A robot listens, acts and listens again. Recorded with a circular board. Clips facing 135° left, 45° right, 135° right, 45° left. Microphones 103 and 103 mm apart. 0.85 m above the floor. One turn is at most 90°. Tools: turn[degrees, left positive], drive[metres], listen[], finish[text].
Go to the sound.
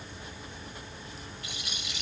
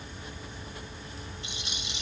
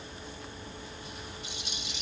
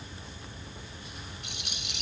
Thought: The rattle: 20° left.
Action: turn[20]
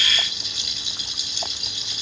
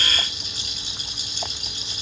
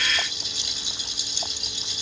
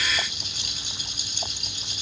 Action: drive[1.0]
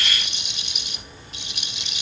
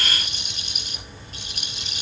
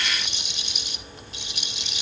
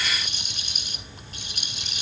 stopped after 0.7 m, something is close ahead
Action: finish[Blocked. The rattle is further on, straight ahead.]